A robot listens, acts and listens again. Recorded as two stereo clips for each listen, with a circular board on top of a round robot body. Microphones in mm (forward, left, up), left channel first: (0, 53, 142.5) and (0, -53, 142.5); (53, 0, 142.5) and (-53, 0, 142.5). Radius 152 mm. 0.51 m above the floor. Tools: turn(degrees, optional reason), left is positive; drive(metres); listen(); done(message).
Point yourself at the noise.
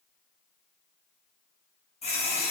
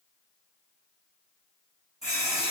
turn(degrees=95, reason="The running tap: 95° left.")
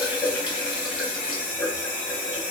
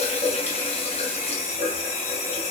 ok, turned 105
turn(degrees=-10, reason="The running tap is now 10° right.")
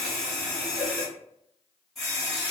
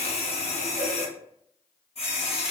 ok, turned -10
done("Facing the running tap.")